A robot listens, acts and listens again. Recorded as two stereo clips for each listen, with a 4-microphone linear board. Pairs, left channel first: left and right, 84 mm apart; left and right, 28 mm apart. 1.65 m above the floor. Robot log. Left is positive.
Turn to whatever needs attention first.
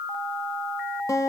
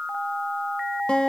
cmd idle
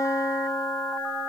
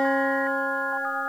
cmd idle
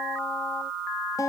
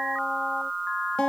end: I can't make out anything urgent to turn to.